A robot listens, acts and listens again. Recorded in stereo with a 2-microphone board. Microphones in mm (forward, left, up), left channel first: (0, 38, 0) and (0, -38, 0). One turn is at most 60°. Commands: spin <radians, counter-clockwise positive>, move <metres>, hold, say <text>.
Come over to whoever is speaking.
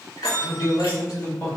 spin 1.05
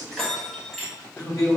spin 0.96
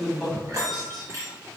move 1.0
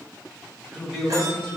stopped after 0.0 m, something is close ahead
say Blocked. The man speaking is further on, straight ahead.